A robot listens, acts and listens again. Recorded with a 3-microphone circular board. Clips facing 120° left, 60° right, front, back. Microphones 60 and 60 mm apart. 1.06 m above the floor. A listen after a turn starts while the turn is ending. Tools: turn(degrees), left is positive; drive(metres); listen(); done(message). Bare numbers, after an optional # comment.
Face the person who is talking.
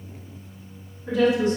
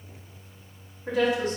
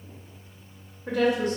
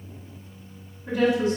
# The woman speaking: 25° right.
turn(-25)
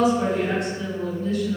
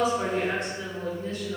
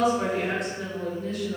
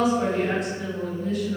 done("Facing the woman speaking.")